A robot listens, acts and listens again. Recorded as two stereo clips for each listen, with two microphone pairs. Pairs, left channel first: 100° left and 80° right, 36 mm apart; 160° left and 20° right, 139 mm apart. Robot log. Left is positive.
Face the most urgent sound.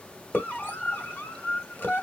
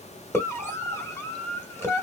note: The scream: 90° left.
cmd yaw +90
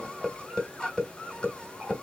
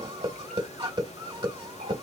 note: The scream is now 35° left.
cmd yaw +35
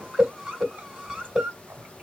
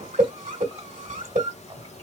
end: Found it: a scream, straight ahead.